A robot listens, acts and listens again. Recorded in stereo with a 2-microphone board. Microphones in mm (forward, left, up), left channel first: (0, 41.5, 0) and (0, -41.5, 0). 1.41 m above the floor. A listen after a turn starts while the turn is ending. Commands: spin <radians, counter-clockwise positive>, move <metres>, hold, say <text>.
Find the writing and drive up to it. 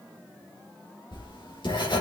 spin 1.57
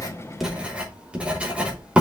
spin -0.26
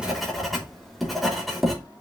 move 1.0
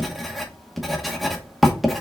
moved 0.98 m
move 1.0
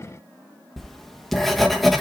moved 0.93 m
move 1.0
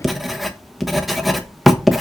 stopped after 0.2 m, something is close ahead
say Arrived at the writing, straight ahead.